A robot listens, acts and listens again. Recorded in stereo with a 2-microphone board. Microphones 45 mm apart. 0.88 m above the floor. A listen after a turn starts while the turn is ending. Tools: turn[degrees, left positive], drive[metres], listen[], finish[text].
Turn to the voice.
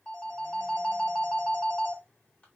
Action: listen[]
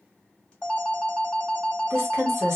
Thought: The woman speaking: about 65° right or 115° right.
Action: turn[-65]
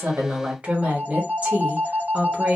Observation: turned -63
Thought: So it is at 35° right.
Action: turn[-35]
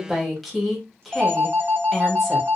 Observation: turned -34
Action: finish[Facing the woman speaking, 1 to 2 m away.]